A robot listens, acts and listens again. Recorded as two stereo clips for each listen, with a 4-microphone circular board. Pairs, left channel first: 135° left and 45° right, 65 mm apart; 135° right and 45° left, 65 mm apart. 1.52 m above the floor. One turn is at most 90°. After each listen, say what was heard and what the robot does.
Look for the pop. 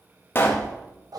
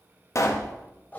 The pop: 170° right. Turn 90° right.
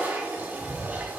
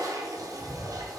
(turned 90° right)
Nothing new. It was at 80° right. Turn 80° right.
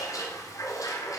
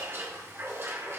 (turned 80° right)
Facing where the pop came from. I can't hear it now.